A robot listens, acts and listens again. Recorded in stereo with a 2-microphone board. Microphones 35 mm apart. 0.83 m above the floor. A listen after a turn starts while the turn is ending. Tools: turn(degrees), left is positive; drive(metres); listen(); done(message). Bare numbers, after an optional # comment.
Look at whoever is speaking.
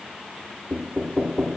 listen()
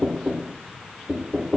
listen()
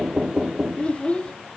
# The child speaking: about 35° left or 145° left.
turn(35)
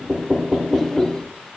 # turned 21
listen()
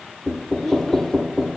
# So it is at 15° left.
turn(15)
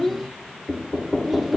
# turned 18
listen()
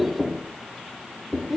done("Facing the child speaking, under 1 m away.")